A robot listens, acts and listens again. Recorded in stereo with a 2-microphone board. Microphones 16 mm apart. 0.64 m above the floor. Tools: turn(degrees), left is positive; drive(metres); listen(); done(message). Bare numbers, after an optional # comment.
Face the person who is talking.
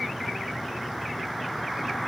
listen()
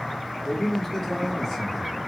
# The man speaking: about 25° left or 155° left.
turn(25)
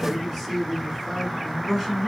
done("Found it: a man speaking, straight ahead.")